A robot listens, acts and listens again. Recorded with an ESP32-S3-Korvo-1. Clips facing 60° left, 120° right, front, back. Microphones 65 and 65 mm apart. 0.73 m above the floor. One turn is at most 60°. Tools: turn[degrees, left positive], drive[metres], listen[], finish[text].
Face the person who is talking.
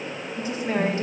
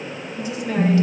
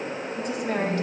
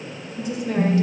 Thought: The woman speaking: 15° left.
Action: turn[15]
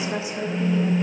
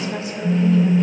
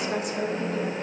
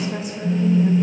Action: finish[Found it: a woman speaking, straight ahead, 1 to 2 m away.]